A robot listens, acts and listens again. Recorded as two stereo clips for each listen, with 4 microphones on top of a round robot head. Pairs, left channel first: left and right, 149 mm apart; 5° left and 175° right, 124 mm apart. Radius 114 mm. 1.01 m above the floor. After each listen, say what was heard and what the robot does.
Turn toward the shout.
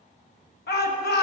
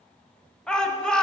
The shout: 90° left. Turn 90° left.
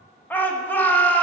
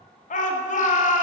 The shout is now 10° left. Turn 10° left.
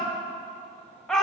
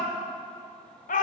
Found it: a shout, straight ahead.